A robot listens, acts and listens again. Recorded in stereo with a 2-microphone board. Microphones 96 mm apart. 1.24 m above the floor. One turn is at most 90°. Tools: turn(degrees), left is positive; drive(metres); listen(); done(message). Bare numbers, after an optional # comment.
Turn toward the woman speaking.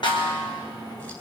listen()
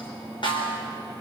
listen()
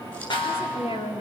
turn(90)
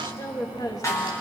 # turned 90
# So it is at 40° left.
turn(40)
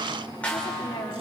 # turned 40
# The woman speaking is now 45° left.
turn(45)
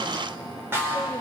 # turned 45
listen()
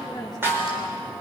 done("Facing the woman speaking, 2 to 4 m away.")